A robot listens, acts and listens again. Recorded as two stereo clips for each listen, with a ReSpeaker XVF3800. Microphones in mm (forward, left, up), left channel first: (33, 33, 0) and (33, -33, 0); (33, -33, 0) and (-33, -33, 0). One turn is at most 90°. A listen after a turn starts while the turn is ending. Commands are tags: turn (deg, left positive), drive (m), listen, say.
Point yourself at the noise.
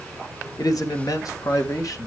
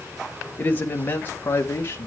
<turn deg="55"/>
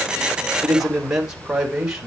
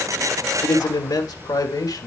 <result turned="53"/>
<turn deg="-10"/>
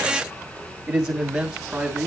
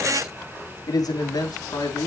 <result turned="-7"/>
<turn deg="-10"/>
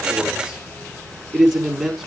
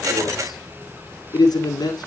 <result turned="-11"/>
<say>Found it: a man speaking, straight ahead, over 4 m away.</say>